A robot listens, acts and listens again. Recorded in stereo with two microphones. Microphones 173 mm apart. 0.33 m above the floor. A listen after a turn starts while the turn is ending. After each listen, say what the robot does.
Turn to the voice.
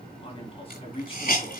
Turn 35° left.
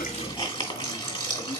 Keep listening.
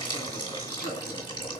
Keep listening.
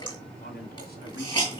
Turn 110° left.
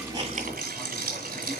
Keep listening.
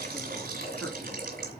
Keep listening.
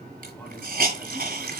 Facing where the man speaking came from. I can't hear it now.